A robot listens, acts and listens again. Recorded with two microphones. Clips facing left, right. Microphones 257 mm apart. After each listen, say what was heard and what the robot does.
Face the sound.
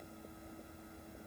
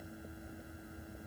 Keep listening.
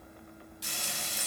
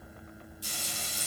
Turn 90° left.
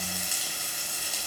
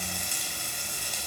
Facing the frying.